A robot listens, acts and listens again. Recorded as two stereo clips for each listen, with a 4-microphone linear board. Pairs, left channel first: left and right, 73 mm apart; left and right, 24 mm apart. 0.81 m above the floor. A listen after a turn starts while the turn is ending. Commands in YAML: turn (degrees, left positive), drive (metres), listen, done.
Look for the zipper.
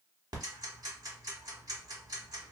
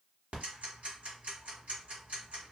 listen: true
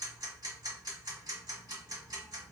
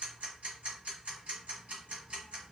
listen: true
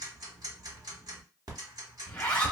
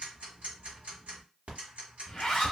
turn: 20
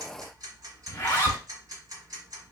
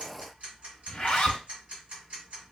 turn: 145
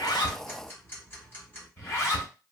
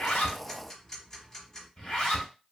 turn: 35
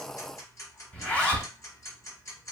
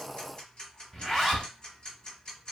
turn: 20
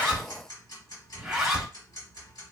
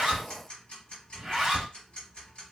done: "Found it: a zipper, straight ahead, 1 to 2 m away."